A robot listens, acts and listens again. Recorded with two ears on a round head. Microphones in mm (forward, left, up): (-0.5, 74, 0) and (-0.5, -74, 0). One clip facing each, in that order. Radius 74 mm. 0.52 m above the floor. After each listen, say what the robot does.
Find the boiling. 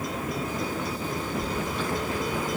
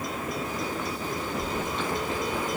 Keep listening.
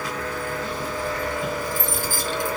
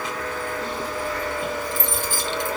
Keep listening.
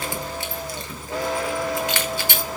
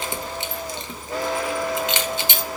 I can't make out boiling, only keys jangling.